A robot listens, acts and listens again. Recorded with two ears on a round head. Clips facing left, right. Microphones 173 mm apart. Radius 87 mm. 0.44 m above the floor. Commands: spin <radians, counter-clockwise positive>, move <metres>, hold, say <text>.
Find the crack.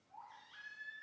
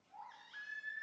hold
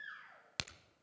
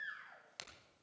spin 1.22
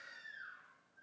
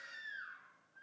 hold
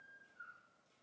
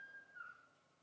say I heard a crack, but can't make it out now. It was about straight ahead or 40° left.